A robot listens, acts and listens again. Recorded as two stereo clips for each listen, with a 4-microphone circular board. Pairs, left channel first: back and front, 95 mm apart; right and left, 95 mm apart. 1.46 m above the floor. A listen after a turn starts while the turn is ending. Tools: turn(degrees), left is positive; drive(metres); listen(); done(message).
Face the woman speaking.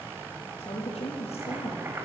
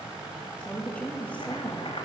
turn(degrees=-165)
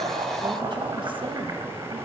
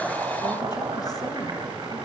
listen()
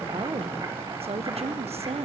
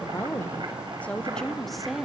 done("Facing the woman speaking.")